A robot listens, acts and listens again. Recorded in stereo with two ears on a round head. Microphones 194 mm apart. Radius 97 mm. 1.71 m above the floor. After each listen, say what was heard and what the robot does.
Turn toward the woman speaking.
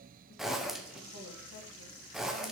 Keep listening.
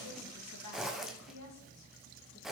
Turn 90° left.
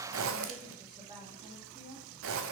So it is at 25° right. Turn 25° right.
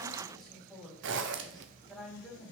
Facing the woman speaking, 2 to 4 m away.